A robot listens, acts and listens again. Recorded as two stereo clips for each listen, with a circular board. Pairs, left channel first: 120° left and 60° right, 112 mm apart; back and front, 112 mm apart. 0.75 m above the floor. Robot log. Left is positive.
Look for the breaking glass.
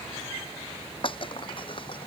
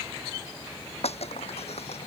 note: The breaking glass: 160° left.
cmd yaw +160
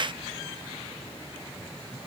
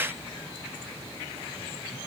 end: Facing where the breaking glass came from. I can't hear it now.